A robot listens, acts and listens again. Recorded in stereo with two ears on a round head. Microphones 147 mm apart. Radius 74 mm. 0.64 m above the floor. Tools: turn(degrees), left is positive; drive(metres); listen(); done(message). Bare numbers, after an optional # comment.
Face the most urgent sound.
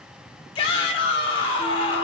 # The shout: about 30° left or 150° left.
turn(30)
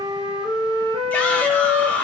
# So it is at 10° left.
turn(10)
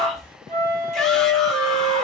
listen()
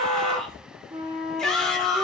done("Found it: a shout, straight ahead.")